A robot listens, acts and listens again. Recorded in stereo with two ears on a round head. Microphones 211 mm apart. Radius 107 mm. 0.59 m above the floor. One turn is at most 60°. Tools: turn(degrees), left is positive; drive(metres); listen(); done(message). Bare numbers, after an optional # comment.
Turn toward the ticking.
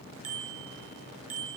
listen()
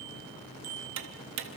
# The ticking: about 55° right or 125° right.
turn(-55)
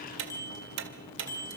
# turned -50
# So it is at 60° right.
turn(-60)
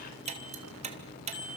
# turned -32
# The ticking is now 30° right.
turn(-30)
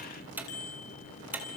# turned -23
# The ticking is now 10° right.
turn(-10)
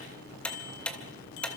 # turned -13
done("Found it: ticking, straight ahead.")